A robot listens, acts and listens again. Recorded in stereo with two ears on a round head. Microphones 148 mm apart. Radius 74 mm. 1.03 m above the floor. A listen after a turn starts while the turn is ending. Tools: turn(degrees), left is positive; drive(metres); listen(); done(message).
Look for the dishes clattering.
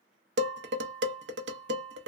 turn(degrees=-75)
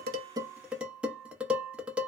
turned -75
done("Found it: dishes clattering, straight ahead, under 1 m away.")